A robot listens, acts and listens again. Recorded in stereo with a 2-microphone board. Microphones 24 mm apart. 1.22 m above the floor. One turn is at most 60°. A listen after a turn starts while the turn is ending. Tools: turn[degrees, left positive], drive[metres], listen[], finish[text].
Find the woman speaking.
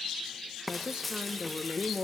Thought: The woman speaking: about 45° right or 135° right.
Action: turn[-45]
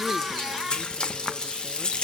Action: listen[]
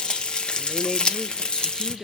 Action: finish[Facing the woman speaking, 1 to 2 m away.]